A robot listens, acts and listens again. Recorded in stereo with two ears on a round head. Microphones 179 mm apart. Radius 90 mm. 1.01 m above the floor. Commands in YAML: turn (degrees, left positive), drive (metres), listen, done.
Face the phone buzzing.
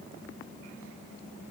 listen: true
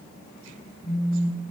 turn: 30
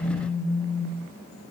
turn: 150
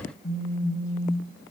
turn: 40
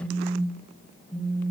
done: "Found it: a phone buzzing, straight ahead."